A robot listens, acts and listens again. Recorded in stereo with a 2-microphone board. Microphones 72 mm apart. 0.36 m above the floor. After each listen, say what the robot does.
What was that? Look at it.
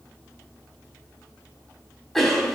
Turn 30° left.
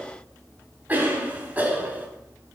Turn 25° right.
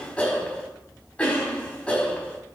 Turn 20° left.
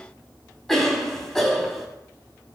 Facing the cough.